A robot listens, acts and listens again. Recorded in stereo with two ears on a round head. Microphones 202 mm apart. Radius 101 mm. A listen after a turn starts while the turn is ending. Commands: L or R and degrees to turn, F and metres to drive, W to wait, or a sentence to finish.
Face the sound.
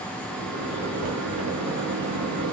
R70
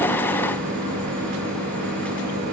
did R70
R40
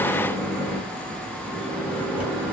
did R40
Facing the microwave.